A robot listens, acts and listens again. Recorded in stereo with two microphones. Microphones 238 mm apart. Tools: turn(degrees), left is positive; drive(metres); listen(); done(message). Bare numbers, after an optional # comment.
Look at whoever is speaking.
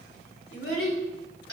# The child speaking: about 60° left or 120° left.
turn(60)
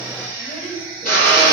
listen()
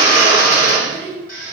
done("Facing the child speaking.")